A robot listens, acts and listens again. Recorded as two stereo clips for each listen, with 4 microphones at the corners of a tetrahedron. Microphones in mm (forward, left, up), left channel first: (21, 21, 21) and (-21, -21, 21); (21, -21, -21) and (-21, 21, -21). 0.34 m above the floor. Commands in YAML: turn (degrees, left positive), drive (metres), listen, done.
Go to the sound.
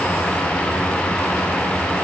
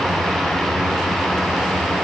listen: true
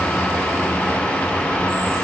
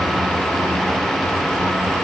listen: true
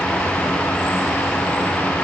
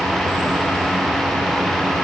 done: "I can't make out anything."